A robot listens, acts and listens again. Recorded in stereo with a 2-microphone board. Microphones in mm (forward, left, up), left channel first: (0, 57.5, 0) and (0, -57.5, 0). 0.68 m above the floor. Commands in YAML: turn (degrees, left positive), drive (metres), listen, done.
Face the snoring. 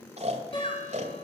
turn: -90
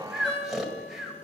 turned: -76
done: "Facing the snoring."